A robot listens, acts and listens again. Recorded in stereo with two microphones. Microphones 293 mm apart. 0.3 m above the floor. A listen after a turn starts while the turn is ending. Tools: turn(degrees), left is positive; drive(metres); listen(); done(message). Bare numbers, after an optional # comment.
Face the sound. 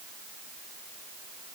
listen()
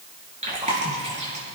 # The chewing: about 25° right or 155° right.
turn(-25)
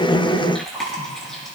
done("Found it: chewing, straight ahead, over 4 m away.")